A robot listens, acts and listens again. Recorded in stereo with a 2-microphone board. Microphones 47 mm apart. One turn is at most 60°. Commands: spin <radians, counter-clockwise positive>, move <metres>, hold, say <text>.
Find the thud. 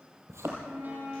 spin -1.05
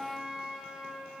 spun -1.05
hold
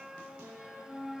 say I heard a thud, but can't make it out now. It was about 5° right or 55° right.